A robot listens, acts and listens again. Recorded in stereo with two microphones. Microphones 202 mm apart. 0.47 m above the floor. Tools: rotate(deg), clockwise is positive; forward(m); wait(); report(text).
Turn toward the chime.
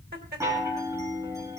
rotate(30)
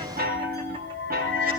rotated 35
rotate(130)
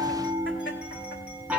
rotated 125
report("Found it: a chime, straight ahead.")